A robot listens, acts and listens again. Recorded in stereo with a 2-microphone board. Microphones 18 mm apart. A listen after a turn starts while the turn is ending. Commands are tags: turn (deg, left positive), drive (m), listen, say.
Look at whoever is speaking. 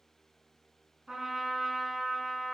<listen/>
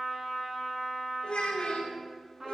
<turn deg="55"/>
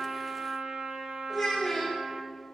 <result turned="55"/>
<say>Found it: a child speaking, straight ahead.</say>